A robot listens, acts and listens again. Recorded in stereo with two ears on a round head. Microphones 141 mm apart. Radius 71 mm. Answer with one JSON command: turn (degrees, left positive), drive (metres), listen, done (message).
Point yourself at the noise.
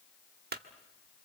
{"turn": -65}
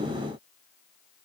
{"listen": true}
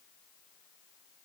{"done": "I heard a clunk, but can't make it out now. It was about straight ahead or 50° right."}